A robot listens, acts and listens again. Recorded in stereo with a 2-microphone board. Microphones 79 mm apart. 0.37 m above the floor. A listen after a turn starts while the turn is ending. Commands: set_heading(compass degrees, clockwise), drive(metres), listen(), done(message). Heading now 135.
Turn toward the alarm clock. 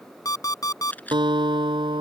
set_heading(80)
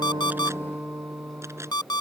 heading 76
set_heading(11)
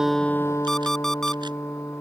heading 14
done("Facing the alarm clock.")